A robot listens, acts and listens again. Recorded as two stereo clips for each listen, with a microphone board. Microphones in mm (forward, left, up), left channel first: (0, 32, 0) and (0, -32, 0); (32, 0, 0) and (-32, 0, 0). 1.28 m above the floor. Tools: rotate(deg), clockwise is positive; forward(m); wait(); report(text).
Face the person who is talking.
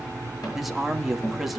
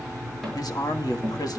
report("Found it: a man speaking, straight ahead, 2 to 4 m away.")